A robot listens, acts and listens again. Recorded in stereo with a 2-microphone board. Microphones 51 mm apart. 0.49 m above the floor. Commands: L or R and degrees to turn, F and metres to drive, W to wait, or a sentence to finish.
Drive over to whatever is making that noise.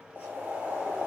R45
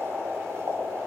R90
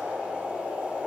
R25
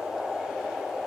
R15
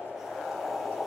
F1.0
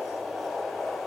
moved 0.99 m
F1.0
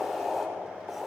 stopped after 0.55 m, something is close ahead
I am next to the boiling.